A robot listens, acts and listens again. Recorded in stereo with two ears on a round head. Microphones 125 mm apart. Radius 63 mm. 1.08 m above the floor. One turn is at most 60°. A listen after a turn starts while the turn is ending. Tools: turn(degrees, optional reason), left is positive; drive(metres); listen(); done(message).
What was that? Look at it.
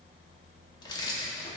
turn(degrees=30, reason="The keys jangling: about 30° left or 150° left.")
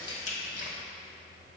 turn(degrees=60, reason="So it is at 120° left.")
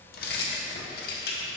turn(degrees=60, reason="The keys jangling is now 75° left.")
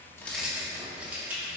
turn(degrees=-10, reason="The keys jangling is now 10° right.")
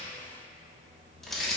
done("Found it: keys jangling, straight ahead, 1 to 2 m away.")